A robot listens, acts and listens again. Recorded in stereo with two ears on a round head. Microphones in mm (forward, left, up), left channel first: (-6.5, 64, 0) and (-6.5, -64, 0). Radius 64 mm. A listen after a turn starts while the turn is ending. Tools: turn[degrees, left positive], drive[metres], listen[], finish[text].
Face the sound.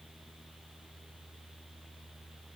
Action: listen[]
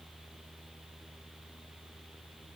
Action: listen[]
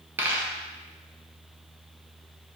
Thought: The dropped coin: about 15° right or 165° right.
Action: turn[-15]
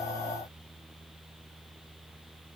Action: listen[]
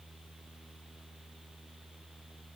Action: finish[I heard a dropped coin, but can't make it out now. It was about straight ahead or 150° right.]